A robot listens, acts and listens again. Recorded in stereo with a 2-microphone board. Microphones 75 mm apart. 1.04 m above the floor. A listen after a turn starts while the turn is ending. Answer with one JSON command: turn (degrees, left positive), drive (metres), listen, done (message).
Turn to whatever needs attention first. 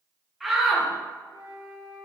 {"turn": 30}
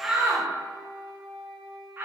{"turn": -35}
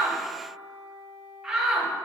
{"turn": -10}
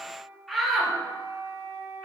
{"done": "Found it: a shout, straight ahead."}